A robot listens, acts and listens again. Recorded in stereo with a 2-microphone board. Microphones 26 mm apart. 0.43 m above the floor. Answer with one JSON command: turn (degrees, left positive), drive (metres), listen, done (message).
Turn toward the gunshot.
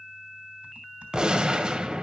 {"turn": -35}
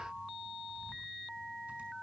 {"listen": true}
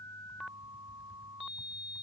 {"done": "I heard a gunshot, but can't make it out now. It was about straight ahead or 110° right."}